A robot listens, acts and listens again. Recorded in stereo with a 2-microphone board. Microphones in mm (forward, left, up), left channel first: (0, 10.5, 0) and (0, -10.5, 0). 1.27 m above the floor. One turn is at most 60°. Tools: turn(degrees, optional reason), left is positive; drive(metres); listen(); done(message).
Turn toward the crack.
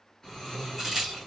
turn(degrees=-30)
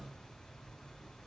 listen()
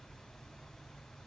done("I heard a crack, but can't make it out now. It was about 15° left or 135° right.")